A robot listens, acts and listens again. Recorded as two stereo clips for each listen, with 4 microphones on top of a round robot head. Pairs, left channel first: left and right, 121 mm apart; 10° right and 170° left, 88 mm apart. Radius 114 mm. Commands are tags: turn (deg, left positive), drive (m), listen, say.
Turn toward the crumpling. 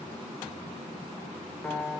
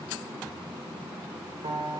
<listen/>
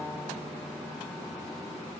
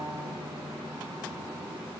<listen/>
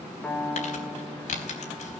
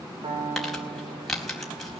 <turn deg="80"/>
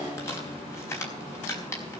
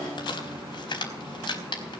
<turn deg="20"/>
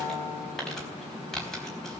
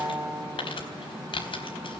<say>Found it: crumpling, straight ahead.</say>